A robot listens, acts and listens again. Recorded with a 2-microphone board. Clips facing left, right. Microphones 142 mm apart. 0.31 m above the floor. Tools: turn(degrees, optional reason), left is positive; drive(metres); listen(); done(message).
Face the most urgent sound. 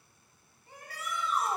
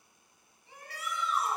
turn(degrees=50, reason="The shout: about 50° left or 130° left.")
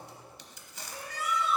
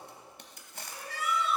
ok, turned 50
turn(degrees=60, reason="So it is at 60° left.")
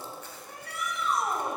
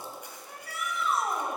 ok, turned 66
done("Found it: a shout, straight ahead.")